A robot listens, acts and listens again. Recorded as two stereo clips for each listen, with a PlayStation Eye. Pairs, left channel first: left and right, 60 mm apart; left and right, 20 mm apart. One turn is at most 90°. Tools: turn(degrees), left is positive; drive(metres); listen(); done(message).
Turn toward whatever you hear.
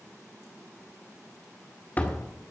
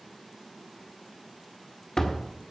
turn(degrees=25)
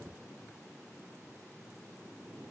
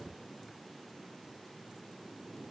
listen()
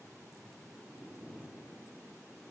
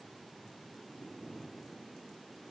done("I heard a door slam, but can't make it out now. It was about straight ahead or 130° left.")